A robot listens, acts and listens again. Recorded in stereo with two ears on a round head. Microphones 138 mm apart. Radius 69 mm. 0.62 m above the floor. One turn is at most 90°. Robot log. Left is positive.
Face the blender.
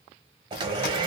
note: The blender: about 30° right or 150° right.
cmd yaw -30
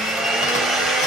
end: Found it: a blender, straight ahead, under 1 m away.